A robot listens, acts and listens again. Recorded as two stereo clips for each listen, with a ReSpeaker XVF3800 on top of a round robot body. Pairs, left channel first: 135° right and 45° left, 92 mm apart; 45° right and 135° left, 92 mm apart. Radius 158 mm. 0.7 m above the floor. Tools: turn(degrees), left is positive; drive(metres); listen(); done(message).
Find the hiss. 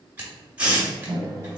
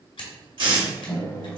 turn(degrees=120)
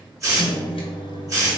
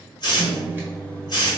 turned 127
done("Facing the hiss, 1 to 2 m away.")